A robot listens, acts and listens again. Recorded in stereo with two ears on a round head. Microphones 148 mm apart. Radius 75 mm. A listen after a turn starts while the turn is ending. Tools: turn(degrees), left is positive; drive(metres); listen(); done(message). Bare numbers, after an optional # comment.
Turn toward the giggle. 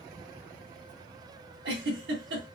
# The giggle: about 75° right or 105° right.
turn(-75)
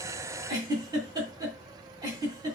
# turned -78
# So it is at 25° right.
turn(-25)
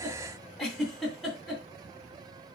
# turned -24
done("Facing the giggle, 2 to 4 m away.")